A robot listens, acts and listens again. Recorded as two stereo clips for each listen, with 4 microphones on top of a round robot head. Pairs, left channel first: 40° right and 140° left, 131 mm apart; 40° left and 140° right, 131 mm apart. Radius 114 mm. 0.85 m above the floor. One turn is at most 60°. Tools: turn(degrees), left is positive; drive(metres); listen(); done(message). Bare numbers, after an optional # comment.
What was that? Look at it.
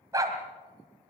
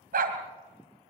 # The dog barking: 155° right.
turn(-60)
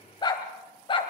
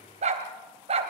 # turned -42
# The dog barking is now 95° right.
turn(-60)
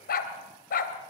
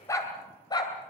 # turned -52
# The dog barking is now 20° right.
turn(-20)
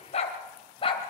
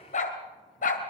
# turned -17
# The dog barking is now 15° left.
turn(15)
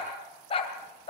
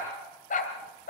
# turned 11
# The dog barking is now 10° left.
turn(10)
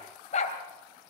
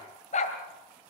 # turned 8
done("Facing the dog barking, 2 to 4 m away.")